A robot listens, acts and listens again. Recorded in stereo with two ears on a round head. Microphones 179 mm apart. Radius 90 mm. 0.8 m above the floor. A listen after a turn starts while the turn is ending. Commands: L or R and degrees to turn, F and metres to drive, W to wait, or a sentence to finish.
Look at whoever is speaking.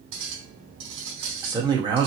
R20
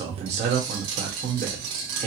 R135
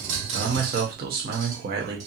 R65
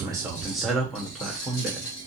Facing the man speaking, 1 to 2 m away.